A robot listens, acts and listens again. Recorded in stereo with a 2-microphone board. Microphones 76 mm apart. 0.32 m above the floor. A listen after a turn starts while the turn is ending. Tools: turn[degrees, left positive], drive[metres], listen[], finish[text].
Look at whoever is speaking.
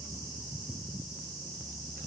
Action: listen[]
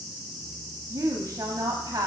Thought: The woman speaking: about 55° right or 125° right.
Action: turn[-55]
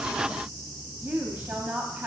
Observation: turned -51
Thought: So it is at 25° right.
Action: turn[-25]
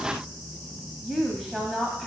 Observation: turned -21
Action: finish[Facing the woman speaking.]